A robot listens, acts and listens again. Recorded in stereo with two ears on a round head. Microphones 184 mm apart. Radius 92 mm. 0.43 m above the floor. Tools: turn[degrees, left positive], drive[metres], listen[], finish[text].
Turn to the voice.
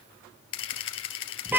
Action: listen[]
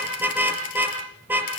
Action: listen[]
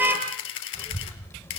Action: turn[30]
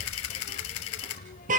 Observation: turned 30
Thought: So it is at 135° left.
Action: turn[135]
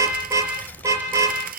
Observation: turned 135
Thought: The child speaking is now 10° left.
Action: turn[10]
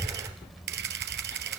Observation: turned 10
Action: finish[Facing the child speaking.]